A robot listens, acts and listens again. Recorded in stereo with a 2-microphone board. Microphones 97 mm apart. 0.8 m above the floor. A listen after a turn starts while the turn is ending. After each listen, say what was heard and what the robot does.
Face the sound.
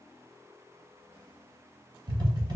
The tapping: about 40° right or 140° right. Turn 40° right.
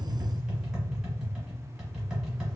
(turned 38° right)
Facing the tapping, 1 to 2 m away.